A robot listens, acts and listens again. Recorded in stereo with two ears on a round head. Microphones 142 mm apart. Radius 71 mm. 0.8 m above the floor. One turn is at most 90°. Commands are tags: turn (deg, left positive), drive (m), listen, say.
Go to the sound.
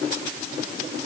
<listen/>
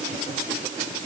<listen/>
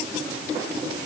<say>I can't make out anything to turn to.</say>